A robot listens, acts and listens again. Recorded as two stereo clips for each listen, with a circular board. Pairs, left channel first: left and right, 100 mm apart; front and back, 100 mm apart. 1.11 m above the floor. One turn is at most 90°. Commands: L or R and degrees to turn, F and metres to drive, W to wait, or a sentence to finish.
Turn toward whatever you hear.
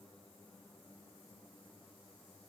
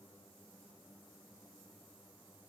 W
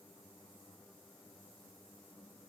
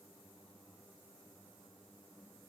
W
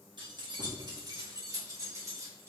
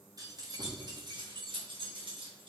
R90
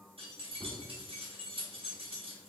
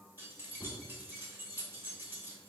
R90
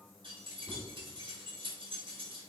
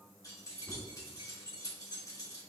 R55
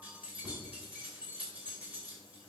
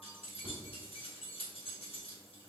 R15
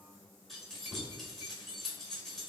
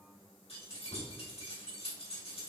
Facing the keys jangling, 1 to 2 m away.